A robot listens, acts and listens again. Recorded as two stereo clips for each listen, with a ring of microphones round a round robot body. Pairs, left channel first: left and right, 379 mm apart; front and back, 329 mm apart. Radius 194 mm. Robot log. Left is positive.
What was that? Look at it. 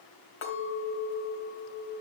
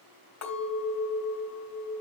note: The clink: 35° left.
cmd yaw +35
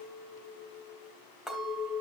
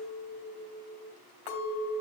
end: Facing the clink, 2 to 4 m away.